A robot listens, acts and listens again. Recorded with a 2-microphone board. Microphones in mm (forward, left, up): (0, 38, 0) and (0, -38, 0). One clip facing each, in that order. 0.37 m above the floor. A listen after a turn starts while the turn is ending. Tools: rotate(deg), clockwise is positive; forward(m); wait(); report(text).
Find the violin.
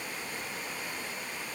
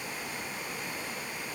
wait()
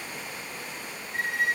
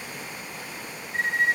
rotate(30)
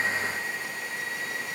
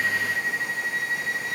rotate(120)
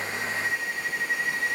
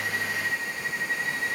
rotate(-20)
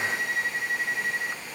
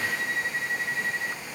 rotate(-10)
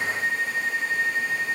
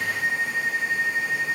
report("Found it: a violin, straight ahead, 1 to 2 m away.")